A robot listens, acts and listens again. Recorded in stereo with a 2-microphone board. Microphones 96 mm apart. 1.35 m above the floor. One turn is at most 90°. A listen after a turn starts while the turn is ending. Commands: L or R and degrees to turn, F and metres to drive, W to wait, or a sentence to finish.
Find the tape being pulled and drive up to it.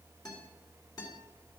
W
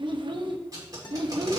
R40
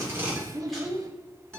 W
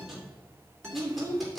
F1.0
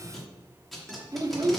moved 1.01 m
F1.0
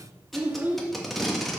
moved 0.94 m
F1.0
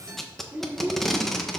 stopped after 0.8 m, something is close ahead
I am next to the tape being pulled.